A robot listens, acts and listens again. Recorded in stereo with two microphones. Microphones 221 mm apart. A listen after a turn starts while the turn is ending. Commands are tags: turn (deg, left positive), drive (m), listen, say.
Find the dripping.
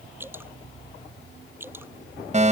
<turn deg="-30"/>
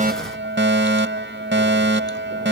<listen/>
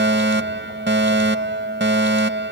<listen/>
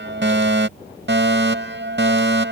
<say>I heard dripping, but can't make it out now. It was about 20° left or 140° right.</say>